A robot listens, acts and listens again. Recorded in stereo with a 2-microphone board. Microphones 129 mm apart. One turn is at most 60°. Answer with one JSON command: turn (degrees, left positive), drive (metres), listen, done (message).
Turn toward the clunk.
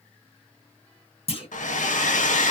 {"turn": 50}
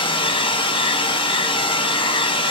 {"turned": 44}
{"listen": true}
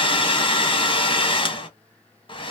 {"done": "I heard a clunk, but can't make it out now. It was about 5° left or 90° left."}